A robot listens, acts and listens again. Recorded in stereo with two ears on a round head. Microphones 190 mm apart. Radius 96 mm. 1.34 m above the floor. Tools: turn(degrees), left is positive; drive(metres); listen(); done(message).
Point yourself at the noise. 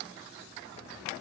listen()
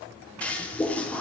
turn(degrees=30)
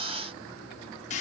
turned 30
turn(degrees=145)
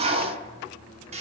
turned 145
turn(degrees=-30)
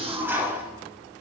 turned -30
turn(degrees=-10)
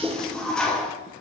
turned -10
done("Found it: a toilet flushing, straight ahead, 1 to 2 m away.")